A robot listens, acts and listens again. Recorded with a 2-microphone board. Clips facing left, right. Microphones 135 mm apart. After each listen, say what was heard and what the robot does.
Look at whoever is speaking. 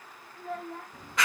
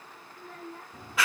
The child speaking: about 70° left or 110° left. Turn 70° left.
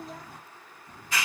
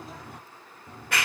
Keep listening.
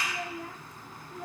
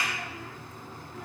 Keep listening.
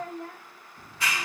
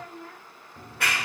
So it is at 40° left. Turn 40° left.
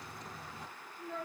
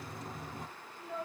The child speaking is now 10° right. Turn 10° right.
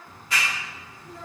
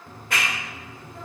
Keep listening.
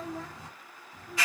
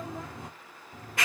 Keep listening.
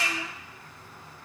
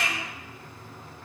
I heard a child speaking from this way, but can't make it out now.